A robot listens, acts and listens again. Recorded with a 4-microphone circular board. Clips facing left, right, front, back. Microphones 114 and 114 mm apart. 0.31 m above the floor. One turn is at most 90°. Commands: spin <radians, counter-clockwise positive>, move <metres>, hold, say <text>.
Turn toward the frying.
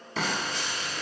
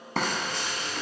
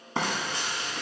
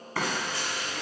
spin -1.13
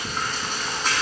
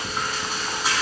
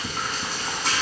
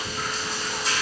spin -0.17
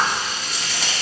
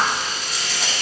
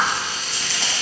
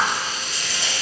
say Found it: frying, straight ahead.